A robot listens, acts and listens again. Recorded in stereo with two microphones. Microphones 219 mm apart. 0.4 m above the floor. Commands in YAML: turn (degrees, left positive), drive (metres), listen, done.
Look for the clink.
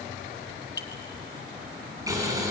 turn: 65
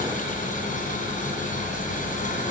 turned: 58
listen: true
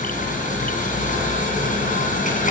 listen: true
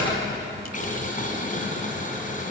done: "I heard a clink, but can't make it out now. It was about 10° left or 55° left."